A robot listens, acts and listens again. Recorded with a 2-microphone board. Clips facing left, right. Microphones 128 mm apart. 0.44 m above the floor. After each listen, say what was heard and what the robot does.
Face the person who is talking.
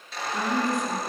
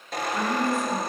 The woman speaking: about 15° left or 165° left. Turn 15° left.
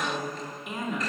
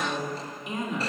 Found it: a woman speaking, straight ahead, over 4 m away.